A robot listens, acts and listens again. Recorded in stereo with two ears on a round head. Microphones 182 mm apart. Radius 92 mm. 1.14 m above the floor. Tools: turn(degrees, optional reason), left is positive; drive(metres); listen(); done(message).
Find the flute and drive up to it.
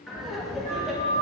turn(degrees=-40, reason="The flute: about 40° right or 140° right.")
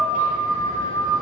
turn(degrees=-100, reason="So it is at 100° right.")
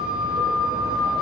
drive(metres=1.0)
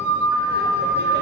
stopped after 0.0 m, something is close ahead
turn(degrees=-10, reason="The flute is now 10° right.")
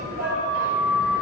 done("Blocked. The flute is further on, straight ahead.")